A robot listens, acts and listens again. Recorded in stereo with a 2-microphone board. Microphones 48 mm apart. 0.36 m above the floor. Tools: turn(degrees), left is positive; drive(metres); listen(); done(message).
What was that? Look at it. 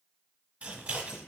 turn(degrees=-30)
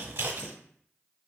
turn(degrees=-115)
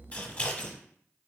turn(degrees=35)
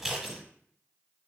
turn(degrees=-10)
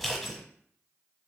done("Found it: scissors, straight ahead, 1 to 2 m away.")